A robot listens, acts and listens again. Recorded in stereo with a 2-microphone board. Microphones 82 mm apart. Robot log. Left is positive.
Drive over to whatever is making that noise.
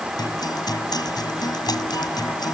note: The guitar: about 55° left or 125° left.
cmd yaw +55
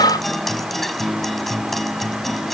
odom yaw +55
cmd fwd 1.0
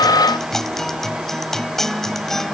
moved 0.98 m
cmd fwd 1.0
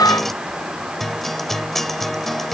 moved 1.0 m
cmd fwd 1.0
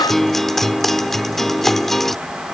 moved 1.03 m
cmd fwd 1.0
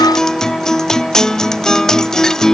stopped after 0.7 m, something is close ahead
end: I am next to the guitar.